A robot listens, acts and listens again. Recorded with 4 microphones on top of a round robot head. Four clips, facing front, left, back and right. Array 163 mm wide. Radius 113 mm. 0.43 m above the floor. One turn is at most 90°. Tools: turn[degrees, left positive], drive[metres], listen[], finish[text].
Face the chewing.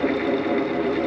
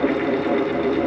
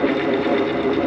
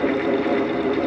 Action: listen[]
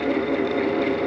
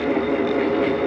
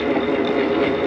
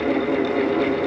Action: listen[]
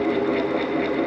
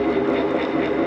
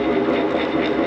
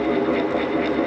Action: finish[I can't make out chewing.]